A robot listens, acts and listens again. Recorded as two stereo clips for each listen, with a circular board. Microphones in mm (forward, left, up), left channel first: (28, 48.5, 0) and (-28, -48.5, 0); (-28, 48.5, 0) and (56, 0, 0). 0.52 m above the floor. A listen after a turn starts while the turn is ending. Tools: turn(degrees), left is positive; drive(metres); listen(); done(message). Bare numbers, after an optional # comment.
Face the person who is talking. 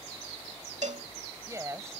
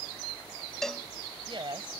# The woman speaking: 55° right.
turn(-55)
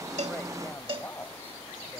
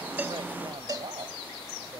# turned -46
# Nothing new. It was at 10° right.
turn(-10)
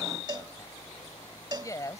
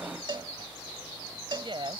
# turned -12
done("Found it: a woman speaking, straight ahead.")